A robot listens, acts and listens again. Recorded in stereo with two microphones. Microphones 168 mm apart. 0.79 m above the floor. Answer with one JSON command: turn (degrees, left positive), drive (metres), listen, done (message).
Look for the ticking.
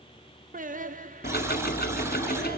{"turn": 65}
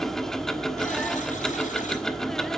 {"done": "Found it: ticking, straight ahead."}